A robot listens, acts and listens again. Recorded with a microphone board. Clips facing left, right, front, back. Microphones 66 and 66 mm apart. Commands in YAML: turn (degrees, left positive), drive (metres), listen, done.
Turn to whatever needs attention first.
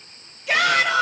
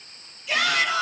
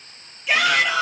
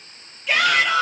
turn: 85
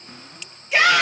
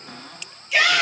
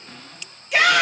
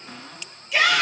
turn: 30
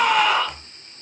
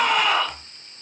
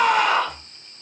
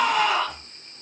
done: "Found it: a shout, straight ahead, 2 to 4 m away."